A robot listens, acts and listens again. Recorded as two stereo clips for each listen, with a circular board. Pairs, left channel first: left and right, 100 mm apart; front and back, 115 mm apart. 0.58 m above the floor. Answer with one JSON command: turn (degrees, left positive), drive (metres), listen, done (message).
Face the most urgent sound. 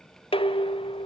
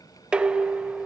{"listen": true}
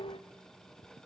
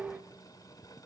{"listen": true}
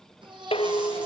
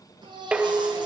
{"turn": -130}
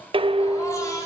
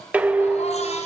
{"turn": 30}
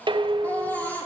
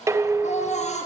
{"turn": 15}
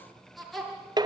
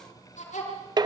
{"done": "Facing the baby crying, over 4 m away."}